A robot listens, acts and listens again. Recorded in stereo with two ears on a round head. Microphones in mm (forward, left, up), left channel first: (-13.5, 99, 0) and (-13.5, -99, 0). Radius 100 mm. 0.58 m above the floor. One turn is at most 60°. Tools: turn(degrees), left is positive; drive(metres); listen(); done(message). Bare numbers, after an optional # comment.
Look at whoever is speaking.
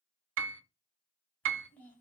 turn(30)
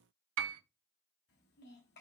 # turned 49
# So it is at 125° left.
turn(60)
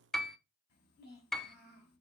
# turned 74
# The child speaking is now 50° left.
turn(50)
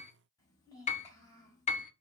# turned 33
# The child speaking is now 15° left.
turn(15)
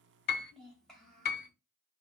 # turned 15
done("Found it: a child speaking, straight ahead, 2 to 4 m away.")